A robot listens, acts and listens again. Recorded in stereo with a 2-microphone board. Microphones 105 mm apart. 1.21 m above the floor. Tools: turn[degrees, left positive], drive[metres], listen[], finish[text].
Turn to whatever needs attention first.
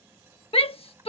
Thought: The shout: about 65° left or 115° left.
Action: turn[65]
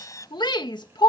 Thought: So it is at 50° left.
Action: turn[50]
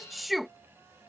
Action: finish[Facing the shout.]